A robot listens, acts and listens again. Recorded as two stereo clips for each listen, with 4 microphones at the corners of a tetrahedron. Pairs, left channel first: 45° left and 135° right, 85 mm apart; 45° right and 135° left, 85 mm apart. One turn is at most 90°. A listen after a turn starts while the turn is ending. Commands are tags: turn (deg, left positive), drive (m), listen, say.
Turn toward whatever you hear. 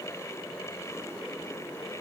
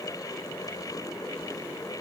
<listen/>
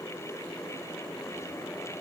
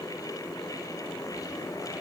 <listen/>
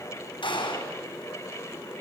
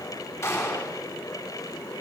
<turn deg="15"/>
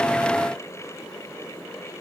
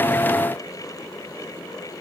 <say>Facing where the gunshot came from. I can't hear it now.</say>